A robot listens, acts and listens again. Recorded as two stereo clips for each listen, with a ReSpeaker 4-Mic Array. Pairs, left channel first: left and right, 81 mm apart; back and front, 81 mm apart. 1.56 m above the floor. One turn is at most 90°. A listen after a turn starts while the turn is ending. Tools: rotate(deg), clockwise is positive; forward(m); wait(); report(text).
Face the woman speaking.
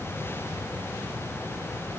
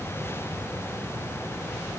wait()
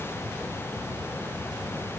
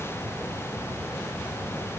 wait()
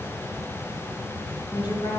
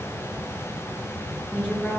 rotate(-90)
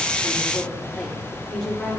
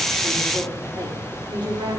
report("Facing the woman speaking, 2 to 4 m away.")